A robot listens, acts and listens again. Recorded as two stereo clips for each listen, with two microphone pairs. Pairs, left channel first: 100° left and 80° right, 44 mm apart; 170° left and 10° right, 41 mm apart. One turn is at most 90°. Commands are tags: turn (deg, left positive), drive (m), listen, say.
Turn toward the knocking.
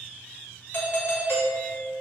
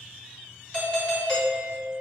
<listen/>
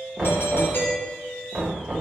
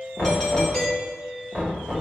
<turn deg="-90"/>
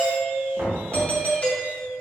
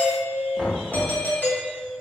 <turn deg="-90"/>
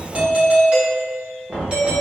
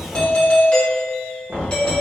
<turn deg="-25"/>
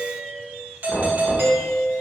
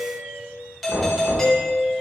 <say>Found it: knocking, straight ahead, 1 to 2 m away.</say>